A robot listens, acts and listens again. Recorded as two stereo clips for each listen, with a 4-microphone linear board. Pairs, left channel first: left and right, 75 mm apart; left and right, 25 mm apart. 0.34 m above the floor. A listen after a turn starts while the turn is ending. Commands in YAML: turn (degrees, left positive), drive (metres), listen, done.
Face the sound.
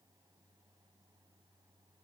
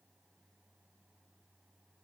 listen: true
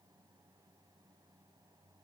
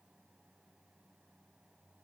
listen: true
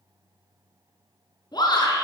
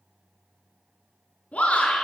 turn: 70
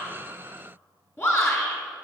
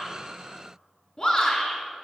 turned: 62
turn: 35
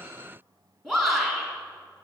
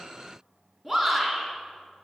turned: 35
done: "Facing the shout, 2 to 4 m away."